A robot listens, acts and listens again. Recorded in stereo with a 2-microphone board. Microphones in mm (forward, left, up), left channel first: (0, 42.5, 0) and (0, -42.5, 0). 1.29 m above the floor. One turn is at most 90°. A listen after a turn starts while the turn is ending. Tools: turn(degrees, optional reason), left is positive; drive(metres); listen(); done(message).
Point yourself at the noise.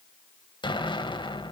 turn(degrees=75, reason="The explosion: about 75° left or 105° left.")
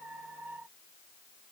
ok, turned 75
listen()
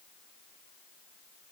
done("I heard an explosion, but can't make it out now. It was about straight ahead or 30° left.")